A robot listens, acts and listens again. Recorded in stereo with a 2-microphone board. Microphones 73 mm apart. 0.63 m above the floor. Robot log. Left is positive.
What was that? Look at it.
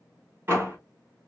note: The door slam: about 35° right or 145° right.
cmd yaw -35
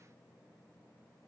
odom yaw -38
cmd idle
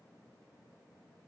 end: I heard a door slam, but can't make it out now. It was about 5° left or 110° right.